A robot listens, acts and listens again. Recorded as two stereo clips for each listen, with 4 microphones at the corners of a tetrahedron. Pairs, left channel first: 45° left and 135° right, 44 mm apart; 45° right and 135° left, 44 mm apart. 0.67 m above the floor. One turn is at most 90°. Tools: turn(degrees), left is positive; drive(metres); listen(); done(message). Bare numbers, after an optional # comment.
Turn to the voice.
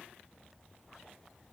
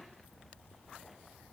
listen()
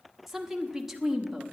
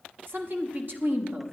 # The woman speaking: 140° left.
turn(90)
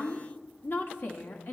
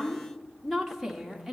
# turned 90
# The woman speaking is now 50° left.
turn(50)
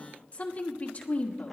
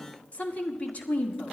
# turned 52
done("Found it: a woman speaking, straight ahead, 1 to 2 m away.")